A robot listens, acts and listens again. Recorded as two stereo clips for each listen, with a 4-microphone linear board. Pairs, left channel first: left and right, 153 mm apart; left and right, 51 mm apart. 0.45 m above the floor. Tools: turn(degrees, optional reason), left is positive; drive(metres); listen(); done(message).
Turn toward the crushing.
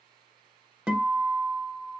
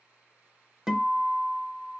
listen()
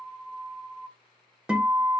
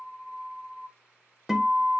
listen()
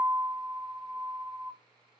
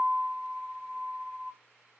done("I can't make out crushing to turn to.")